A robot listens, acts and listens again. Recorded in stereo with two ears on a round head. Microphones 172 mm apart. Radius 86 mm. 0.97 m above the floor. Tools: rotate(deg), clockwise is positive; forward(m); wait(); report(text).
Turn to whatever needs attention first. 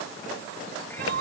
rotate(55)
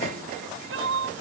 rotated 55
rotate(70)
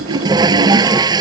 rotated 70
wait()
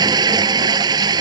wait()
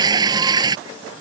report("I heard crying from this way, but can't make it out now.")